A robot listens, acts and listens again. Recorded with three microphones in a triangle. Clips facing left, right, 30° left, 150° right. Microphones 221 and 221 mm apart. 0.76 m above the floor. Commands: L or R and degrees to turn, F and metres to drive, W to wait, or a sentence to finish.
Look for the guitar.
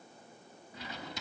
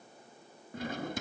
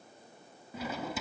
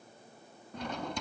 W
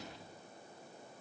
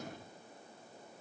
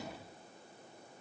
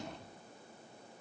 W
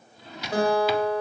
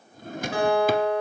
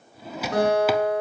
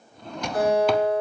L40
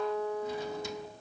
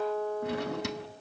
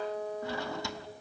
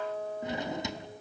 L15
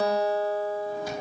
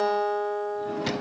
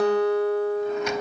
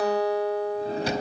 Found it: a guitar, straight ahead.